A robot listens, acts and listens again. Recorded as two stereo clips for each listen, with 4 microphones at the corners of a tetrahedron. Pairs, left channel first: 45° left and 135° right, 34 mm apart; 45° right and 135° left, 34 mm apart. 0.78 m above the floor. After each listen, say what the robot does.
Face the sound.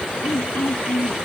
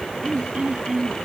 Turn 75° left.
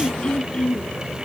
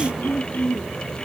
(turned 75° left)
Turn 15° right.
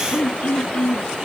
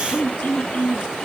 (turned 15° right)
Found it: throat clearing, straight ahead.